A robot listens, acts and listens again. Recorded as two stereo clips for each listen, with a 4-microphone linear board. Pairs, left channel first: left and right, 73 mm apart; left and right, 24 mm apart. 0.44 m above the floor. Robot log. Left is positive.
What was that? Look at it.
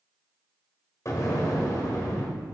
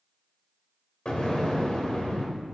note: The explosion: about 50° left or 130° left.
cmd yaw +50
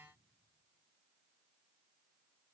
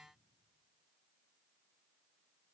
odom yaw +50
cmd idle
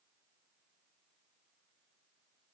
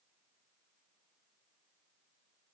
end: I heard an explosion, but can't make it out now. It was about straight ahead or 80° left.